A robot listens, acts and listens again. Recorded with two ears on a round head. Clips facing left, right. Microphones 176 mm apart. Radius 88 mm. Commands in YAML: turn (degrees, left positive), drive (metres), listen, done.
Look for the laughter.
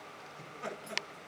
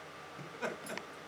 turn: -90
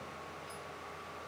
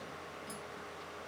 listen: true
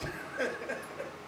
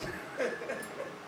done: "Facing the laughter."